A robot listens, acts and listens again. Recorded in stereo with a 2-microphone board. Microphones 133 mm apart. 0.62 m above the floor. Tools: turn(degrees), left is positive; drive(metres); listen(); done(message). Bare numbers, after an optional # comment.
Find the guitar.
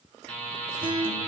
# The guitar: about 40° right or 140° right.
turn(-40)
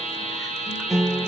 done("Facing the guitar, 1 to 2 m away.")